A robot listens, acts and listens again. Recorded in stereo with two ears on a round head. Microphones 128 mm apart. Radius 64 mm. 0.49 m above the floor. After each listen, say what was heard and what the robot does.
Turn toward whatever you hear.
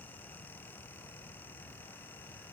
Keep listening.
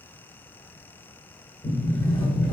The sliding door: about 20° left or 160° left. Turn 20° left.
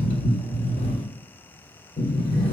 So it is at 130° left. Turn 130° left.
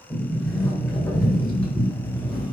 Found it: a sliding door, straight ahead.